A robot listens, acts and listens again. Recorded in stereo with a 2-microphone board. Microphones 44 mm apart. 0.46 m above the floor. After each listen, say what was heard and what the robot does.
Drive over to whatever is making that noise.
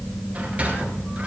The sliding door: about 35° right or 145° right. Turn 35° right.
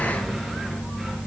Keep listening.
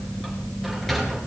Drive 1.0 m forward.
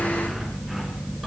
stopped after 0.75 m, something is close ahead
Keep listening.
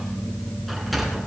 Something is in my way. I am facing the sliding door but have not reached it.